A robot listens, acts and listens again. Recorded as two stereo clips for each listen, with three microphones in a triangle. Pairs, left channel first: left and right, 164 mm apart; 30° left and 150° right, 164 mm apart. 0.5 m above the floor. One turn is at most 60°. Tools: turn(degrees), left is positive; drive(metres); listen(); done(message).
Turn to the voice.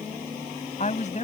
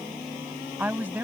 turn(degrees=60)
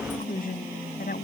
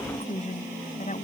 turn(degrees=60)
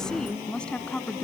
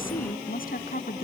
turn(degrees=10)
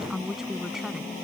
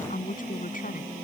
done("Found it: a woman speaking, straight ahead.")